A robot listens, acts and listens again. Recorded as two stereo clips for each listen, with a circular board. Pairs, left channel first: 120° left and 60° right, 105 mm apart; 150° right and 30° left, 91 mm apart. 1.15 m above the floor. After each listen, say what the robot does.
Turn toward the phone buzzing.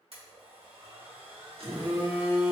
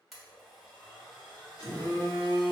Turn 90° right.
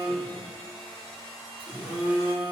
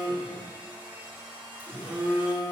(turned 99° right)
Turn 10° left.
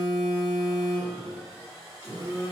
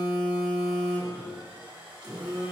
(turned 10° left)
Found it: a phone buzzing, straight ahead.